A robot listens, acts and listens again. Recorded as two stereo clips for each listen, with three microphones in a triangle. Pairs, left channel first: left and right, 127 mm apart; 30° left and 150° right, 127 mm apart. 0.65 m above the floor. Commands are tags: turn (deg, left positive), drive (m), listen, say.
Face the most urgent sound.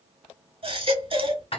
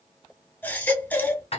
<turn deg="-45"/>
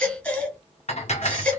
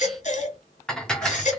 <turn deg="10"/>
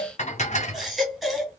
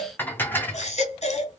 <say>Facing the baby crying.</say>